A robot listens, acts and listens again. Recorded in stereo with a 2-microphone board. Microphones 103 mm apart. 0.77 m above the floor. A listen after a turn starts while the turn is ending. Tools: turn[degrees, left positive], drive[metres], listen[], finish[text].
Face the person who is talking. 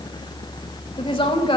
Thought: The woman speaking: about 50° left or 130° left.
Action: turn[50]
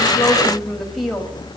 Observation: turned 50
Action: listen[]
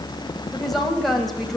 Action: finish[Facing the woman speaking, over 4 m away.]